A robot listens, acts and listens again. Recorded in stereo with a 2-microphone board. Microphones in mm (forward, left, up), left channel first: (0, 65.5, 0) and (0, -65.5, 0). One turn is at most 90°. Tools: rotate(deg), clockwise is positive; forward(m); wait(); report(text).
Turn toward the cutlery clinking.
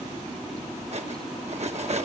rotate(55)
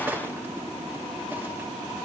rotate(15)
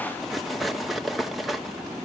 report("Facing the cutlery clinking, 1 to 2 m away.")